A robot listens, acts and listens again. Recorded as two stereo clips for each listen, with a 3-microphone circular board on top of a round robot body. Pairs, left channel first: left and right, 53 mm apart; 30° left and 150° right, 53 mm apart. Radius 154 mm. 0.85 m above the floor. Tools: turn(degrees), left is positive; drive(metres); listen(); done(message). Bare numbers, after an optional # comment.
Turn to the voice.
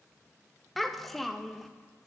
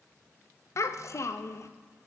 done("Found it: a child speaking, straight ahead.")